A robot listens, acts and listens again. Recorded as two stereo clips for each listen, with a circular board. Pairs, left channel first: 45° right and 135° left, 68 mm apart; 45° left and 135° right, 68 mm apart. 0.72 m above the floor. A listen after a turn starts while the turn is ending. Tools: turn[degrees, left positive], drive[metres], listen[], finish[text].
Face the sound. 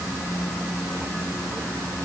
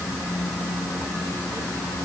Action: listen[]
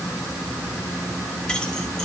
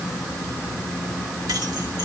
Action: listen[]
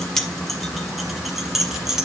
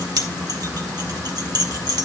Thought: The keys jangling: 140° right.
Action: turn[-140]
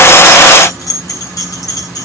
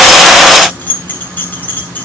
Thought: The keys jangling is now 20° right.
Action: turn[-20]
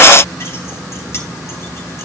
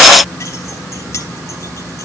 Action: listen[]
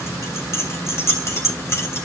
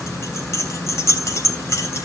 Action: finish[Facing the keys jangling.]